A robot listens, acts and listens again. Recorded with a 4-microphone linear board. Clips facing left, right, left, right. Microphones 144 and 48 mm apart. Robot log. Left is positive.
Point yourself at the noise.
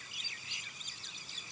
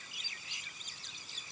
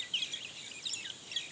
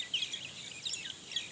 cmd idle
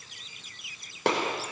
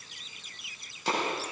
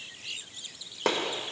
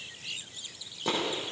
note: The gunshot: about 65° left or 115° left.
cmd yaw +65
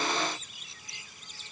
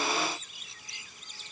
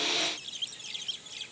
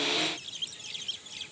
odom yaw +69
cmd idle
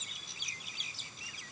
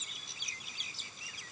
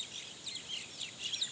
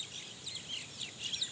end: I heard a gunshot, but can't make it out now. It was about 5° right or 45° left.